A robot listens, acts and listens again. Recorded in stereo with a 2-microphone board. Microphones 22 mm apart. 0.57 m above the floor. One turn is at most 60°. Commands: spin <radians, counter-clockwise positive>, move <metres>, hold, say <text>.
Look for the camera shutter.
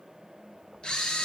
spin 0.70
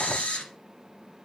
spin 1.05
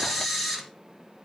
say Found it: a camera shutter, straight ahead.